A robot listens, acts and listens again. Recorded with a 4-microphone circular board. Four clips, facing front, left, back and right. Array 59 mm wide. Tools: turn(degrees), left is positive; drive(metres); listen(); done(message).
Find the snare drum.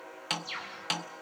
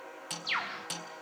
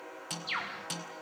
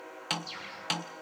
turn(degrees=-45)
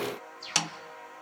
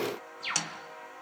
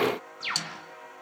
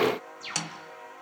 done("Found it: a snare drum, straight ahead, 1 to 2 m away.")